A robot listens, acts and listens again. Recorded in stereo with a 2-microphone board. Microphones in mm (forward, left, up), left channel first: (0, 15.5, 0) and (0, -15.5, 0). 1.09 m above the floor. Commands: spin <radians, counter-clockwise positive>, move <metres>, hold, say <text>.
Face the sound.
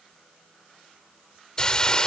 spin 0.44
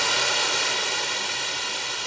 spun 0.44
say Found it: a hiss, straight ahead.